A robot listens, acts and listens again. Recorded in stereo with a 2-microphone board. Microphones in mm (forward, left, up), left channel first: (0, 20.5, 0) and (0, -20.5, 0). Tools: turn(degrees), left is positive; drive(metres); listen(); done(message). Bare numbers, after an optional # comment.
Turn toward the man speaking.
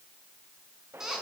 listen()
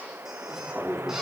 turn(-30)
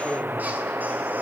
listen()
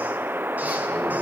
listen()
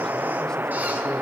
done("I heard a man speaking, but can't make it out now. It was about 20° left or 140° right.")